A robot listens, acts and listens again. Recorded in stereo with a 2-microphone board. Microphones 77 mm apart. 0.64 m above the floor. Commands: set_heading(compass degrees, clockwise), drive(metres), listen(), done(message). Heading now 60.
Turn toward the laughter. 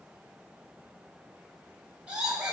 set_heading(90)
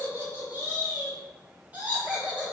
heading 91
set_heading(121)
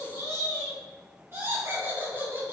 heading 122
set_heading(267)
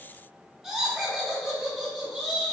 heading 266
done("Found it: laughter, straight ahead, 2 to 4 m away.")